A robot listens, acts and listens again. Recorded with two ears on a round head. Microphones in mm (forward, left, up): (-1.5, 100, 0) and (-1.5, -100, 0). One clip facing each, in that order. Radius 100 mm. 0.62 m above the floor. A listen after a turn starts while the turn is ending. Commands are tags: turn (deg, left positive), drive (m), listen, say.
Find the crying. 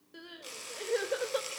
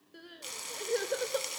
<turn deg="30"/>
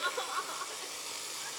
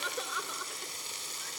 <listen/>
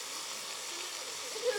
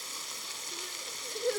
<listen/>
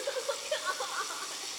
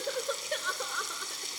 <turn deg="-30"/>
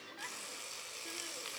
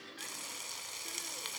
<listen/>
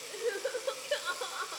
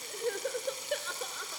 <say>Facing the crying.</say>